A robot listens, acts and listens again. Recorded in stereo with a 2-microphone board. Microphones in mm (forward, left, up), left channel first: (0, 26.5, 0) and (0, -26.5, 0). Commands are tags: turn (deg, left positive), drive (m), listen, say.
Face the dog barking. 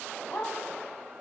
<turn deg="45"/>
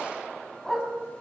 <say>Facing the dog barking, over 4 m away.</say>